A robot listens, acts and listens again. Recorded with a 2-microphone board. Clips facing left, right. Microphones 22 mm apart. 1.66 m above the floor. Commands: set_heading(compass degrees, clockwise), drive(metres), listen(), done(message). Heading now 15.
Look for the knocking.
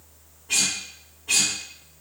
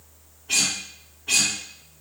listen()
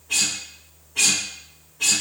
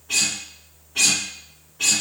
listen()
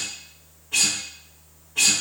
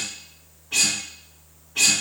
done("I can't make out knocking, only a guitar.")